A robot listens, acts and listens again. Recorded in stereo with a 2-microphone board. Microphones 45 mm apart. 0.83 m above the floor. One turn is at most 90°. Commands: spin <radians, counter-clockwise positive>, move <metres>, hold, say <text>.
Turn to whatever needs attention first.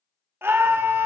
spin -1.05
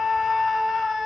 say Found it: a scream, straight ahead, 1 to 2 m away.